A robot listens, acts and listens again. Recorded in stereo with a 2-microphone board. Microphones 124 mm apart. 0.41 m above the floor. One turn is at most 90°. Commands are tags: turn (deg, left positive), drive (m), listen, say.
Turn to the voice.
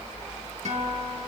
<listen/>
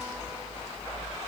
<listen/>
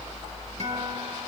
<say>I can't make out anyone speaking, only a guitar.</say>